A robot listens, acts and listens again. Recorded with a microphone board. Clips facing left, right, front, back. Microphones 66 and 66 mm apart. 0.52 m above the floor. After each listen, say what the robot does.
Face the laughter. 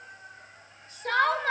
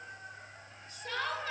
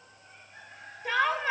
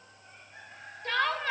Turn 75° left.
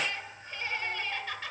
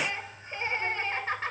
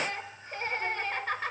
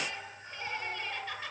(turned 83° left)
Turn 40° right.
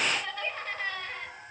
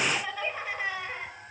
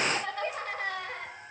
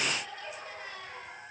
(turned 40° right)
Turn 15° right.
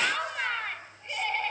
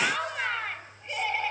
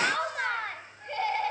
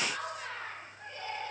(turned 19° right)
Facing the laughter.